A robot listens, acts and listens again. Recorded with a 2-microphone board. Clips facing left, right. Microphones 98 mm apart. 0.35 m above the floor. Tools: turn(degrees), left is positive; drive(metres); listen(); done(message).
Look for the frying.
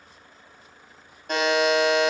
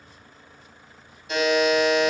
listen()
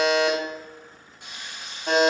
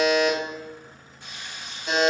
turn(degrees=20)
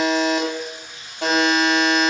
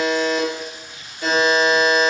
done("Facing the frying, 1 to 2 m away.")